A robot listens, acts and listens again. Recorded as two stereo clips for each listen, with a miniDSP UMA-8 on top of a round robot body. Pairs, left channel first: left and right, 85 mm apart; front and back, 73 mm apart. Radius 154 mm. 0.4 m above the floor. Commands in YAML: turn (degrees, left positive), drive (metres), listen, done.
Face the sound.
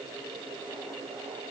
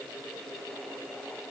listen: true
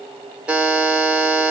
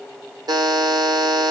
turn: -165
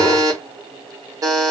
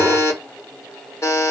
turn: -50
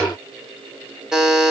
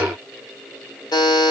turn: -10
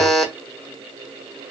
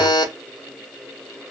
done: "Facing the buzzer."